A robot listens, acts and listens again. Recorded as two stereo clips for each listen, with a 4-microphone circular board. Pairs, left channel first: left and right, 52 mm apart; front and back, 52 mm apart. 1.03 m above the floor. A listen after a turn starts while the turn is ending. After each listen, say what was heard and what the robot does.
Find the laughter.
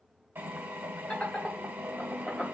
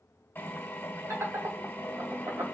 The laughter: 170° left. Turn 170° left.
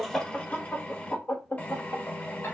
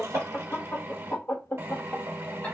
The laughter is now 60° left. Turn 60° left.
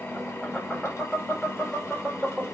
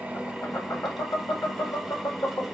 The laughter is now 10° left. Turn 10° left.
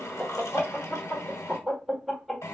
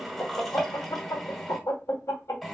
Facing the laughter, 1 to 2 m away.